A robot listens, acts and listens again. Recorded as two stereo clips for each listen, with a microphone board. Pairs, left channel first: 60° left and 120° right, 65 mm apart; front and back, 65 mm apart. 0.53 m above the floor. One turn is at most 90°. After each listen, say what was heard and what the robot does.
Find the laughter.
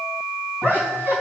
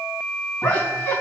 The laughter: 70° right. Turn 70° right.
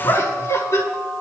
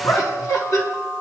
The laughter is now 15° left. Turn 15° left.
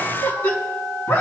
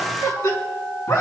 Found it: laughter, straight ahead.